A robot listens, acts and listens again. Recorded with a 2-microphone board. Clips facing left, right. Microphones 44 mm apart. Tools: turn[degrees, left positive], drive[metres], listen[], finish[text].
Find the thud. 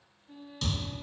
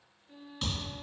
Thought: The thud: about 20° right or 160° right.
Action: turn[-20]
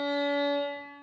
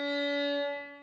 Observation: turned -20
Action: listen[]
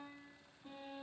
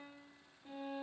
Action: finish[I heard a thud, but can't make it out now. It was about straight ahead or 140° right.]